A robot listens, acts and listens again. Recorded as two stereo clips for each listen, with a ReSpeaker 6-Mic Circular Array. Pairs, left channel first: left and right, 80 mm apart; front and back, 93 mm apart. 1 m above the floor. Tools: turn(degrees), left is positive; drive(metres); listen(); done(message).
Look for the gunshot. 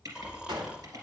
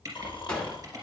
turn(degrees=-80)
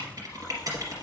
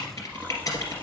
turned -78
done("I heard a gunshot from this way, but can't make it out now.")